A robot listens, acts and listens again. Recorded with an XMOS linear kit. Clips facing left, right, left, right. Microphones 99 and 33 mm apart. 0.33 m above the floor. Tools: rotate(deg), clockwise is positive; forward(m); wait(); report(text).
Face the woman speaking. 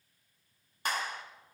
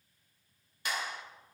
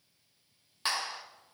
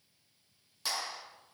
wait()
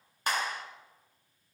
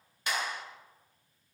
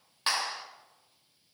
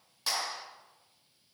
wait()
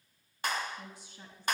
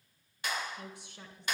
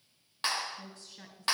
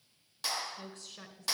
rotate(70)
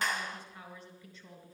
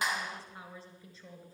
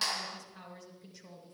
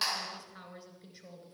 rotate(35)
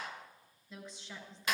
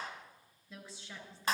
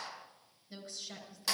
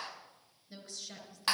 report("Found it: a woman speaking, straight ahead, over 4 m away.")